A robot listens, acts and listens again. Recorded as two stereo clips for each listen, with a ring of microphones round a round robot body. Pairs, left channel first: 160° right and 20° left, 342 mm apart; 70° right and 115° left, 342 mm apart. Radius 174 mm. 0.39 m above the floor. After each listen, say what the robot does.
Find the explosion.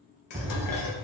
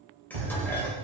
Turn 100° left.
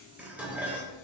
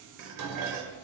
Facing where the explosion came from. I can't hear it now.